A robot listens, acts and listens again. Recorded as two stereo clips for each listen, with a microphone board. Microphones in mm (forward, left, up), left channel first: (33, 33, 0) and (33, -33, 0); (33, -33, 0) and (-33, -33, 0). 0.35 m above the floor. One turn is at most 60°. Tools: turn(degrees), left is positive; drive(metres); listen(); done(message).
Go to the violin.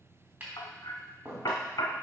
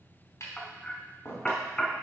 listen()
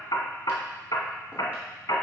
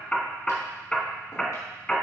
listen()
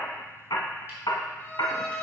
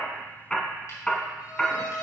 turn(degrees=25)
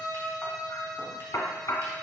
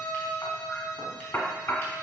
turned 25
drive(metres=1.0)
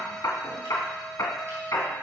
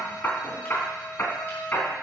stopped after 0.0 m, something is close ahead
done("Something is in my way. I am facing the violin but have not reached it.")